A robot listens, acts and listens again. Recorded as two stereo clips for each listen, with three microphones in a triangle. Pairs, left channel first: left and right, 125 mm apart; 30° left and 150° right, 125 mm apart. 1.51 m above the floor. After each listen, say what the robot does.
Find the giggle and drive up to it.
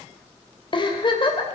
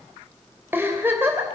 Turn 140° left.
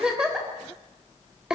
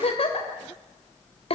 Drive 1.0 m forward.
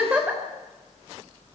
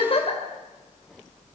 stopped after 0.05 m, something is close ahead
Turn 10° right.
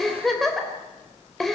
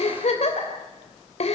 Blocked. The giggle is further on, straight ahead.